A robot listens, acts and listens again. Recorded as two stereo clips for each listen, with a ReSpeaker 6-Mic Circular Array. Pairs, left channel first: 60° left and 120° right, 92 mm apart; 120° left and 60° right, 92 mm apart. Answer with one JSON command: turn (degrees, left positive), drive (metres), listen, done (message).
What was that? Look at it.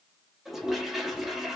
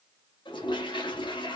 {"turn": 155}
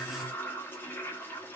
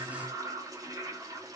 {"turn": -10}
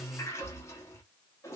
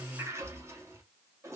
{"done": "Facing the toilet flushing, under 1 m away."}